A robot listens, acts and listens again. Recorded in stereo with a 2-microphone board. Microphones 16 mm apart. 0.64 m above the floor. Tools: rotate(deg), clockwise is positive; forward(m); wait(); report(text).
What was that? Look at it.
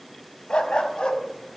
rotate(-70)
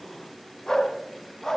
rotate(-30)
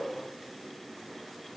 wait()
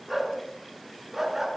rotate(20)
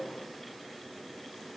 report("Facing the dog barking.")